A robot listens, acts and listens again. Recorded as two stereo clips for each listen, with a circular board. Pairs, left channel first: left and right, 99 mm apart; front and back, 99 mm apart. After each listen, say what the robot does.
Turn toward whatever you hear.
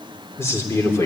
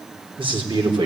Turn 150° left.
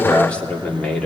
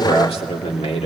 Facing the man speaking.